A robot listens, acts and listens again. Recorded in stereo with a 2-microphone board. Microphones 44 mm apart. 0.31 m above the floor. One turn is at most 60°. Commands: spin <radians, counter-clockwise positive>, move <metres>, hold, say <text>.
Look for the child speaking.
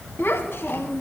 spin 1.05
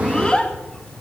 spin 0.44
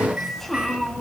spin 0.26
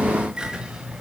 hold
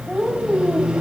spin 0.35
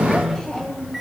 spin 0.35
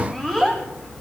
spin 0.17
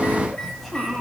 say Facing the child speaking, 1 to 2 m away.